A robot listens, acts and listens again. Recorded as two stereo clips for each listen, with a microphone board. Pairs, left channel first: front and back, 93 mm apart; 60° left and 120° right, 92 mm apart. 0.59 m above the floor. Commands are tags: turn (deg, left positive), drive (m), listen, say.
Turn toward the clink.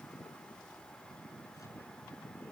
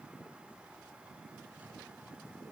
<listen/>
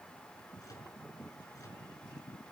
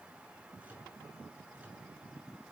<listen/>
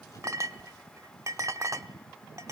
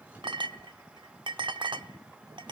<turn deg="-130"/>
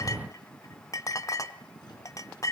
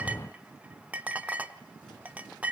<turn deg="-50"/>
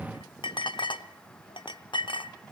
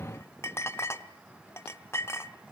<say>Found it: a clink, straight ahead.</say>